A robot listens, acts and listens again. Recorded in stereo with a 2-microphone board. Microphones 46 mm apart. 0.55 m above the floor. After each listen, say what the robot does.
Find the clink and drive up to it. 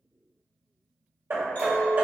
Turn 50° left.
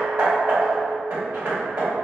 Keep listening.
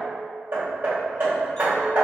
Keep listening.
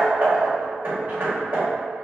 I heard a clink, but can't make it out now. It was about straight ahead or 80° left. I did not reach it.